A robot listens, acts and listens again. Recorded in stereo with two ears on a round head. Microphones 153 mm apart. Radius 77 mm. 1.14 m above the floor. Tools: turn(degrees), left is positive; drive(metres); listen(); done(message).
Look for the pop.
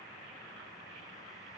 listen()
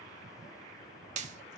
turn(degrees=-45)
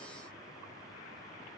listen()
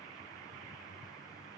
done("I heard a pop, but can't make it out now. It was about straight ahead or 90° right.")